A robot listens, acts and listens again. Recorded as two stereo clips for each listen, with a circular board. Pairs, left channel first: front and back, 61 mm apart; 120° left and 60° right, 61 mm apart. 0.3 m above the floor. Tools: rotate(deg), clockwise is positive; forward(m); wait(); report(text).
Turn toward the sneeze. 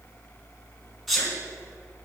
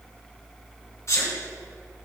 rotate(-90)
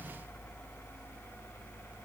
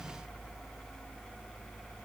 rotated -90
report("Facing where the sneeze came from. I can't hear it now.")